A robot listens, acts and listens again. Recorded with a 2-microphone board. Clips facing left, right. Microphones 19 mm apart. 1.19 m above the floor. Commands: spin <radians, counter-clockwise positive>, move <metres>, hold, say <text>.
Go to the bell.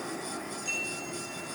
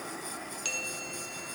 spin -1.22
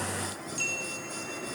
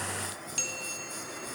spin -0.70
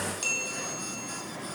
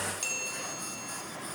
move 1.0
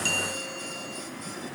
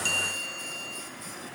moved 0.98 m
move 1.0
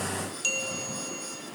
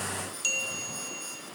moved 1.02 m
move 1.0
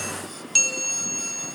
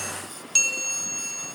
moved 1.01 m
spin 0.17
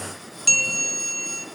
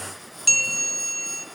move 1.0
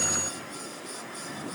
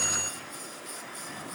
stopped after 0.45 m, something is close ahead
hold
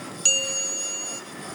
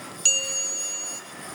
say I am next to the bell.